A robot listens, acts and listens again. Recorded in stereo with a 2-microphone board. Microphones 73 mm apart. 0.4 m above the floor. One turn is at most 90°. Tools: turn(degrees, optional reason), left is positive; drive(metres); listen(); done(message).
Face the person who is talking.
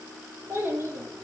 turn(degrees=-30, reason="The child speaking: about 30° right or 150° right.")
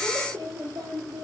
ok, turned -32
turn(degrees=-90, reason="So it is at 115° right.")
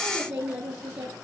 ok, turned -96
turn(degrees=-15, reason="The child speaking is now 15° right.")
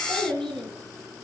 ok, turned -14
done("Facing the child speaking.")